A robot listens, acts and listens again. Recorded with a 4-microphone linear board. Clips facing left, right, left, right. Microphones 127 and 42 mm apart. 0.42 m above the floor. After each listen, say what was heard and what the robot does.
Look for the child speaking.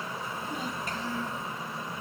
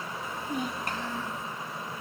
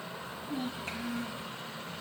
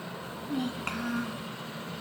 Turn 90° right.
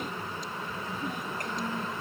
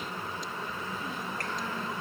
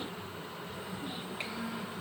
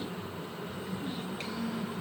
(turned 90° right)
Keep listening.
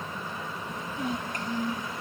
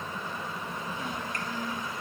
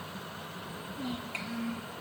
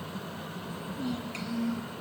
The child speaking is now 20° left. Turn 20° left.
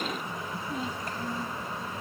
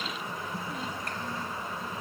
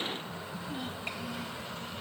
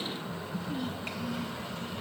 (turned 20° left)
Facing the child speaking.